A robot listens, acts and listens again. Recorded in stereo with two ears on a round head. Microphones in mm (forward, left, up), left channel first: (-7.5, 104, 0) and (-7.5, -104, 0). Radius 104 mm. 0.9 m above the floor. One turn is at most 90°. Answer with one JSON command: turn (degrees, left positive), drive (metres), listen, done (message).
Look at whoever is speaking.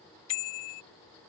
{"listen": true}
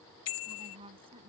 {"turn": -25}
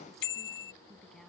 {"listen": true}
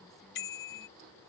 {"listen": true}
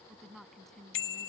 {"done": "Found it: a woman speaking, straight ahead."}